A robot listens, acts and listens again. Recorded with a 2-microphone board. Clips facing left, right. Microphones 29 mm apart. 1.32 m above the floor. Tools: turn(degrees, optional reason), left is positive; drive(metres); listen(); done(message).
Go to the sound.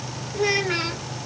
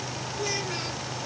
turn(degrees=40, reason="The child speaking: about 40° left or 140° left.")
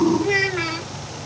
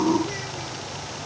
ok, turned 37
turn(degrees=100, reason="So it is at 100° left.")
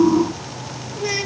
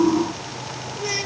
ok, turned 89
turn(degrees=10, reason="The child speaking is now 10° left.")
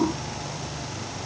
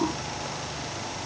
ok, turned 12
listen()
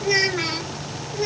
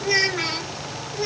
drive(metres=1.0)
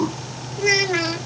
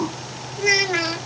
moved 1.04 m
drive(metres=1.0)
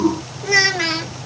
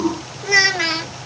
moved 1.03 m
drive(metres=1.0)
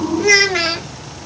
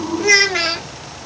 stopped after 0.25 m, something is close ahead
done("Arrived at the child speaking, straight ahead.")